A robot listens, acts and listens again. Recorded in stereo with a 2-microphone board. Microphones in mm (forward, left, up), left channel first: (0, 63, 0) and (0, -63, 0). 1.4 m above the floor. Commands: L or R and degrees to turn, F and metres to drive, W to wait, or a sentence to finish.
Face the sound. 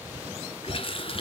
L45
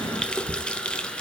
L10
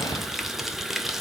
Found it: a running tap, straight ahead, 1 to 2 m away.